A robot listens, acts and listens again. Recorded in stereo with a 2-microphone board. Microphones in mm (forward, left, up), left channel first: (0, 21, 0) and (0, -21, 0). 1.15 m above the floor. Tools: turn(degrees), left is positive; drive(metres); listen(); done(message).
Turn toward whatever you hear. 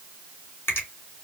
turn(degrees=60)
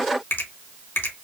turn(degrees=65)
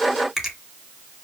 done("Found it: a finger snap, straight ahead.")